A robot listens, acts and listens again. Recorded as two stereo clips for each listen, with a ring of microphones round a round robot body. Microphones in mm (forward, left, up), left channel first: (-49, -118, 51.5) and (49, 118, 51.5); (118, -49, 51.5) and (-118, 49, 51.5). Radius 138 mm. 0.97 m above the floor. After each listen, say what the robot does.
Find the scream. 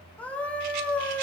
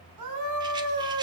Turn 165° left.
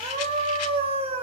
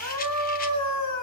Found it: a scream, straight ahead, over 4 m away.